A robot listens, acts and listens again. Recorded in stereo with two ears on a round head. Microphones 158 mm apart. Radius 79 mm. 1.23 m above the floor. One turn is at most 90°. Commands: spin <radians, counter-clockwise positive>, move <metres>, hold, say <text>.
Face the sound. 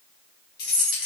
spin 0.96
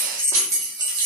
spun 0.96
spin -0.52
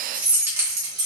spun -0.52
spin -0.44
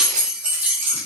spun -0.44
spin -0.26
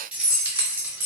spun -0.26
spin -0.17
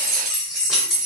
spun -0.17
say Facing the keys jangling, 2 to 4 m away.